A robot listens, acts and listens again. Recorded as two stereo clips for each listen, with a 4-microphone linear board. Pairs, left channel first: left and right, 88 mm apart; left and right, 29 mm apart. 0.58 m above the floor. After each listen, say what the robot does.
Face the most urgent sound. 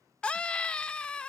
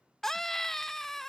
Turn 30° left.
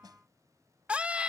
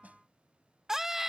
Turn 15° right.
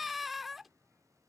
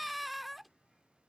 Facing the scream.